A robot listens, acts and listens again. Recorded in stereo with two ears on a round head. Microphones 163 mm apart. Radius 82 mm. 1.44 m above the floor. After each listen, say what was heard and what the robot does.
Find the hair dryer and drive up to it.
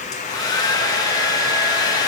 The hair dryer: about 20° left or 160° left. Turn 20° left.
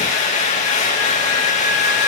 So it is at 140° left. Turn 140° left.
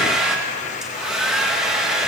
Drive 1.0 m forward.
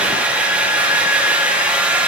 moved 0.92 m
Drive 1.0 m forward.
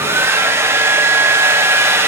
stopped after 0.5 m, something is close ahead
The hair dryer is now 15° right. Turn 15° right.
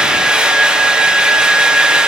I am next to the hair dryer.